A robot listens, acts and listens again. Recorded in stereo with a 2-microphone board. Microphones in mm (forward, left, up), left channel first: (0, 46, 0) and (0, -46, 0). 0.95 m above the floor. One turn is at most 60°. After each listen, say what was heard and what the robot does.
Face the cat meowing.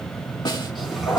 Turn 30° right.
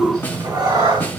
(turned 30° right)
So it is at 130° right. Turn 60° right.
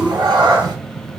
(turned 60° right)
The cat meowing is now 55° right. Turn 55° right.
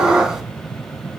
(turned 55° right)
The cat meowing is now 10° right. Turn 10° right.
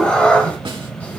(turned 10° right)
The cat meowing is now 15° left. Turn 15° left.
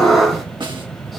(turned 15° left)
Found it: a cat meowing, straight ahead.